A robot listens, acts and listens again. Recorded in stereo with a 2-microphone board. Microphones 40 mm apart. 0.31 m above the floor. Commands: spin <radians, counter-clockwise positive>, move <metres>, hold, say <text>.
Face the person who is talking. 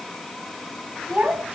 spin -0.70
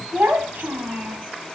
spin -1.75
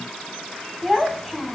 say Facing the child speaking.